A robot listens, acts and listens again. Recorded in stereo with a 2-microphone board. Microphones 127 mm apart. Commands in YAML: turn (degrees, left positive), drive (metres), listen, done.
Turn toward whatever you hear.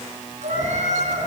turn: -65
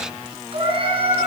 turn: -45
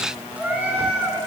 turn: -10
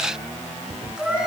done: "Found it: a cat meowing, straight ahead, 2 to 4 m away."